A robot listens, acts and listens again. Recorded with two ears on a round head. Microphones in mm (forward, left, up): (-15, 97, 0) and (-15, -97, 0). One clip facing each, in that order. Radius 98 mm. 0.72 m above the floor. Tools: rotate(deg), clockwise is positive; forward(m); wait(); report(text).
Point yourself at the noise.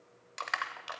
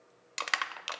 rotate(40)
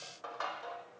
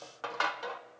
rotate(95)
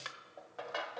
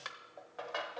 report("Facing the crushing, under 1 m away.")